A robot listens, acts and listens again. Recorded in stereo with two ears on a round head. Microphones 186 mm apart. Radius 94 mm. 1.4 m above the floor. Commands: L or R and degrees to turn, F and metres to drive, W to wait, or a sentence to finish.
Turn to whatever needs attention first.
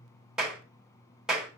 W
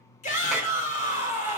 L40
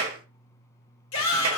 L100
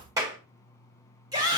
R20
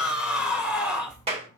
Facing the shout, 1 to 2 m away.